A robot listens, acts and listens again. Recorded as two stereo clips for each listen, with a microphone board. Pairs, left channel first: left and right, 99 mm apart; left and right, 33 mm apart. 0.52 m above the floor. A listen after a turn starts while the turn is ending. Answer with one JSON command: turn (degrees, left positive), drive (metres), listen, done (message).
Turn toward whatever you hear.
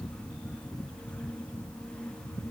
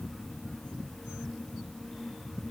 {"listen": true}
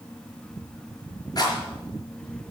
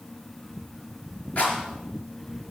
{"turn": 45}
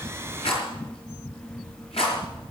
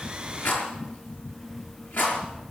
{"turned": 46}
{"turn": 90}
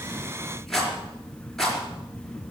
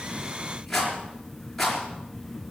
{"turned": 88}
{"done": "Found it: a rattle, straight ahead, over 4 m away."}